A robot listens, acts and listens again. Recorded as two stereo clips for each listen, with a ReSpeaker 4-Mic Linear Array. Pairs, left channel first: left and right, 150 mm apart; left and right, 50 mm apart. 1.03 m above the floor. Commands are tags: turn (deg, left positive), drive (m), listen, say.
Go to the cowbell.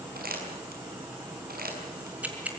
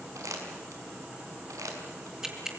<listen/>
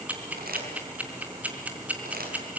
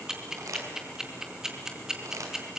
<listen/>
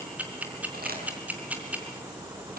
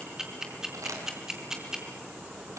<say>I can't make out a cowbell, only crumpling and ticking.</say>